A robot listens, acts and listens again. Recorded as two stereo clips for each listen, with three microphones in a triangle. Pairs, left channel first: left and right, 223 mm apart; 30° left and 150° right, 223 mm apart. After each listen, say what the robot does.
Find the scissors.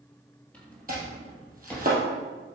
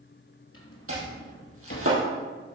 Keep listening.
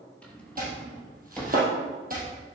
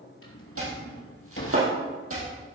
Keep listening.
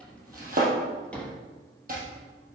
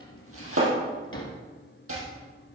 I can't make out scissors, only chopping and a drawer.